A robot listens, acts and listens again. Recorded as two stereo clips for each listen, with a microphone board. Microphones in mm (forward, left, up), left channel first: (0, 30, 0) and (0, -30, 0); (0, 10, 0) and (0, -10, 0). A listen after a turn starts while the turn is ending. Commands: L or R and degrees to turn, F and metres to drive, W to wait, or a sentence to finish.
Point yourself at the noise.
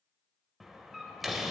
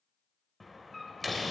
L30
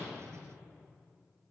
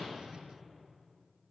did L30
W
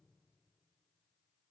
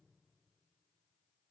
I heard a door slam, but can't make it out now. It was about 30° right or 150° left.